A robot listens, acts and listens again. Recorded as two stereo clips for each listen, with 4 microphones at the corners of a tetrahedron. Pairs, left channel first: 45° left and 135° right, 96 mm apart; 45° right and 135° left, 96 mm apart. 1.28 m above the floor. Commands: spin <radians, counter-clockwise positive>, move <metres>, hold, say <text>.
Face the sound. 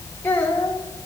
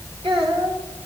spin 1.92
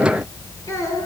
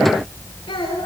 spin -0.17
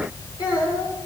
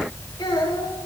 say Facing the child speaking, over 4 m away.